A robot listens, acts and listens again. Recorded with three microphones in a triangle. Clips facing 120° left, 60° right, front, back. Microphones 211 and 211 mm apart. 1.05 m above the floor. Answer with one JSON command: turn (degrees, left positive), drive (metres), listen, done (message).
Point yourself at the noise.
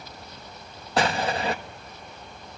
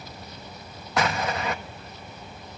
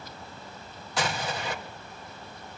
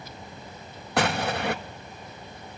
{"turn": 175}
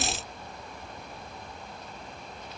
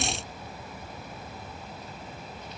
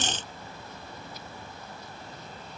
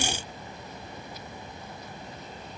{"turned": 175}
{"done": "I heard an explosion from this way, but can't make it out now."}